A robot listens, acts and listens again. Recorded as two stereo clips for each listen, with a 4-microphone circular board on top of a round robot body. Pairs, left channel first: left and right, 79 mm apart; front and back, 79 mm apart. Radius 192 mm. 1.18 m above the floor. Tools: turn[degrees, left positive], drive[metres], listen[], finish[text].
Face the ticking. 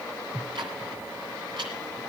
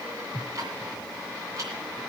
Thought: The ticking: 125° right.
Action: turn[-125]
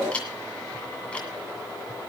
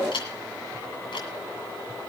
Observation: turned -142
Thought: The ticking is now 15° left.
Action: turn[15]
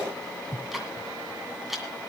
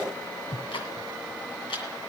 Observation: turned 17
Action: finish[Found it: ticking, straight ahead, 2 to 4 m away.]